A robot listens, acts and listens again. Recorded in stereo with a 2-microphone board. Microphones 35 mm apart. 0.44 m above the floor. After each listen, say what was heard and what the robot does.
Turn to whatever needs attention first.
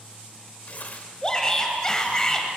The shout: about 20° left or 160° left. Turn 20° left.
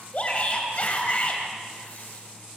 So it is at 135° left. Turn 135° left.
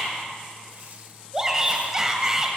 The shout is now 15° right. Turn 15° right.
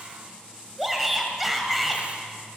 Found it: a shout, straight ahead.